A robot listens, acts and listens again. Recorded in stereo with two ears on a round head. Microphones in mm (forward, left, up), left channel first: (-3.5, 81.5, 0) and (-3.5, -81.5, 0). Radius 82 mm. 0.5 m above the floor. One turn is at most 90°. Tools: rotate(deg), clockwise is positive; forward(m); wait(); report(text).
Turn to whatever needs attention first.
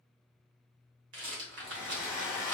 wait()
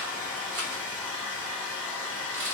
wait()
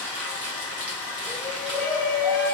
rotate(35)
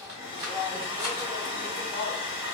report("Found it: a shout, straight ahead, 1 to 2 m away.")